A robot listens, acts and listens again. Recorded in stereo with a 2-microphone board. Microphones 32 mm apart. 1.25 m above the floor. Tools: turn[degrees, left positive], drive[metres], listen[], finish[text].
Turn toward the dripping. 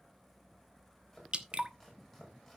Thought: The dripping: about 40° right or 140° right.
Action: turn[-40]
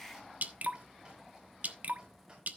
Thought: So it is at 95° right.
Action: turn[-95]
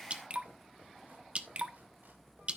Thought: The dripping is now 50° right.
Action: turn[-50]
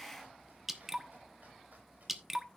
Thought: The dripping is now 10° right.
Action: turn[-10]
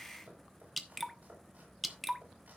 Action: finish[Found it: dripping, straight ahead, 1 to 2 m away.]